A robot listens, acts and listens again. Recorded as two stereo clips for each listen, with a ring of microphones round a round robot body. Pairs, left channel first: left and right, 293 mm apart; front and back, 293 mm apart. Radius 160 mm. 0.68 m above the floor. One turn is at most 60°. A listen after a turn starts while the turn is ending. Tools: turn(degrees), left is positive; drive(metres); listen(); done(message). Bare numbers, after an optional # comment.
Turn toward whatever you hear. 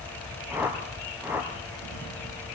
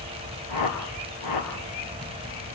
done("Found it: a whoosh, straight ahead, 2 to 4 m away.")